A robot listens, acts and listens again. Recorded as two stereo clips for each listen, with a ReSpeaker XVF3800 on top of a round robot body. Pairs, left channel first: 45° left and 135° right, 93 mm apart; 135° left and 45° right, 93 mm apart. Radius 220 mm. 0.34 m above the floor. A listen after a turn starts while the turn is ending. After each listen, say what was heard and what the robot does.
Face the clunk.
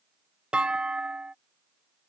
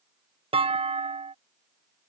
The clunk: 55° right. Turn 55° right.
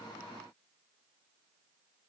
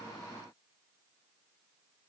I heard a clunk from this way, but can't make it out now.